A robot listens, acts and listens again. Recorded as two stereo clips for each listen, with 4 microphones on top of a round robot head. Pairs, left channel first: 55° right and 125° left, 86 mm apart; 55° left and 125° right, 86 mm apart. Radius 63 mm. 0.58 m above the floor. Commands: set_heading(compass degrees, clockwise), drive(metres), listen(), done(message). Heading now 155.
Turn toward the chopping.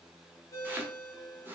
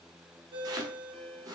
set_heading(325)
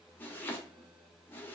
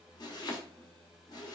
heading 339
set_heading(324)
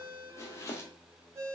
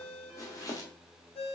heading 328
done("Found it: chopping, straight ahead.")